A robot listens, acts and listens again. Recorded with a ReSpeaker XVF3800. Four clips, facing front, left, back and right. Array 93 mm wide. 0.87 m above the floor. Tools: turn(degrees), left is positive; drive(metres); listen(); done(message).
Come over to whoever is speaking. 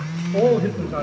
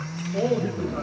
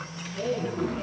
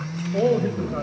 drive(metres=1.0)
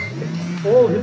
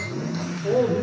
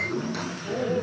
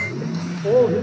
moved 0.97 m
turn(degrees=-15)
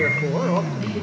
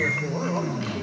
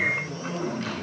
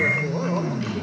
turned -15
listen()
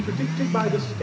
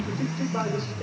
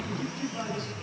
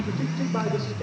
listen()
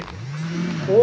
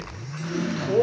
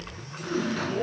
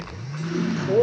drive(metres=1.0)
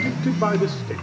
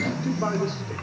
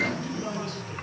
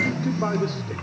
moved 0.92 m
drive(metres=1.0)
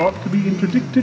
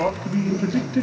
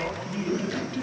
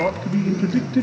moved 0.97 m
turn(degrees=10)
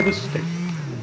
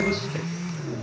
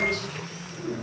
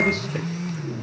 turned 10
listen()
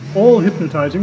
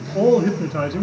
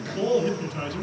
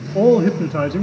drive(metres=1.0)
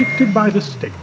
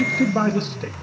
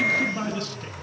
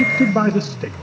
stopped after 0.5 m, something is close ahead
done("I am next to the man speaking.")